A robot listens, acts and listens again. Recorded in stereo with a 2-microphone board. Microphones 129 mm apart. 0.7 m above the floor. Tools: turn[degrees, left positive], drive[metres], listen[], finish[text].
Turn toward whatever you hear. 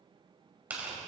Action: turn[-30]
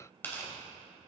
Thought: So it is at 15° left.
Action: turn[15]
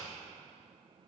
Action: listen[]
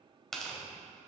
Action: finish[Found it: tearing paper, straight ahead.]